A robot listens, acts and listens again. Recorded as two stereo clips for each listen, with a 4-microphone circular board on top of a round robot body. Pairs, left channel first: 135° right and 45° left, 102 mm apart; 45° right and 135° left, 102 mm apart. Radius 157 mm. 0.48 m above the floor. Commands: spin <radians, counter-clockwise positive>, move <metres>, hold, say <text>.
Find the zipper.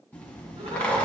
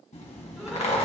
spin -1.05
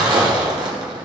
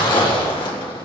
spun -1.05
say Facing the zipper.